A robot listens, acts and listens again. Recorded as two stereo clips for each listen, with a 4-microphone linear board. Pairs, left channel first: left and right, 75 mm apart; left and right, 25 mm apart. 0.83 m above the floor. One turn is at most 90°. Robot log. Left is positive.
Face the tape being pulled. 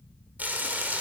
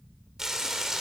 cmd idle
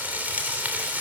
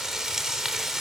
cmd idle
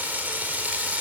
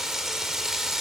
end: I can't make out tape being pulled, only frying.